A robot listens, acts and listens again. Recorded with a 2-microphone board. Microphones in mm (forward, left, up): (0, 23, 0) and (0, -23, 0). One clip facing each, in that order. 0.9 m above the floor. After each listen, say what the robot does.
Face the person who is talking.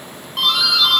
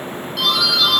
Keep listening.
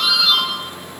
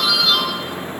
Keep listening.
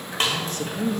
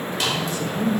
Turn 55° left.
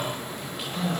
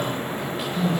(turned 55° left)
Facing the man speaking, under 1 m away.